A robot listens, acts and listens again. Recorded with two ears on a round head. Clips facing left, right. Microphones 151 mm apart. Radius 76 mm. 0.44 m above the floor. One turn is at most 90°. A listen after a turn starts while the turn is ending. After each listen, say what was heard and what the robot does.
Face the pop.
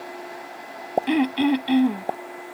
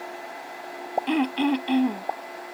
The pop: about 30° left or 150° left. Turn 30° left.
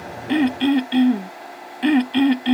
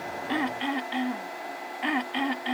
Keep listening.
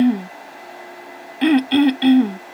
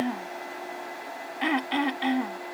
I heard a pop, but can't make it out now. It was about straight ahead or 120° left.